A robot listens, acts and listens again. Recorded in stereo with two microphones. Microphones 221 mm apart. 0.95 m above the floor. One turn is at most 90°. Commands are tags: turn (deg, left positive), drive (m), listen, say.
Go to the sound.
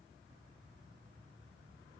<listen/>
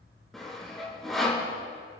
<turn deg="30"/>
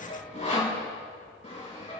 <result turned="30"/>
<turn deg="90"/>
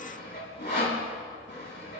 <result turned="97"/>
<turn deg="50"/>
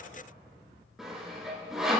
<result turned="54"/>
<drive m="1.0"/>
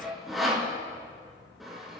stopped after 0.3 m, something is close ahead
<say>Something is in my way. I am facing the sawing but have not reached it.</say>